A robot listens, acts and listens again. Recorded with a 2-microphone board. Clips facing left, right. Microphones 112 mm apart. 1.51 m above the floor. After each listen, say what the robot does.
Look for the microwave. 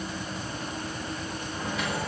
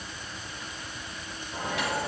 Turn 90° right.
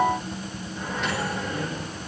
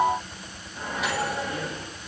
Facing the microwave, over 4 m away.